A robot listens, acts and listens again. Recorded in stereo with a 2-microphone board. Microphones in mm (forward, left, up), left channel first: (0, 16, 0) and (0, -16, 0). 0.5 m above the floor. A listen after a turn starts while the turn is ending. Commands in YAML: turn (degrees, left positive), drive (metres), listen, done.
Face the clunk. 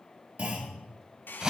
turn: -50
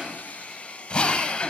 listen: true
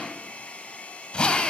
done: "I heard a clunk, but can't make it out now. It was about straight ahead or 80° right."